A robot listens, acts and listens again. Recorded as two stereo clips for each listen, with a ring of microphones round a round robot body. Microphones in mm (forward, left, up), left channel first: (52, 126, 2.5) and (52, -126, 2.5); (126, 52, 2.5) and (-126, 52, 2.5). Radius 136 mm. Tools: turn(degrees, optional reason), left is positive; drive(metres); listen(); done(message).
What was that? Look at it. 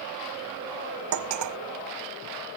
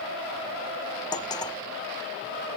turn(degrees=-75, reason="The cutlery clinking: 75° right.")
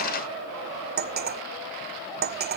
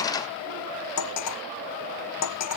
turn(degrees=-40, reason="The cutlery clinking is now 40° right.")
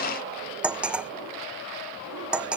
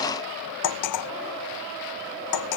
done("Facing the cutlery clinking.")